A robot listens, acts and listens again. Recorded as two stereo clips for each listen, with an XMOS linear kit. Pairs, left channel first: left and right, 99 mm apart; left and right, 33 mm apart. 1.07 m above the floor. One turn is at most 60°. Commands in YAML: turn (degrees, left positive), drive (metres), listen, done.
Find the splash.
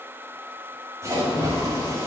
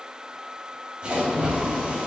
turn: -30
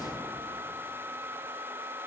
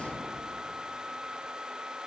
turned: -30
listen: true
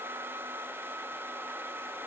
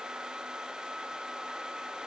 done: "I heard a splash, but can't make it out now. It was about straight ahead or 120° right."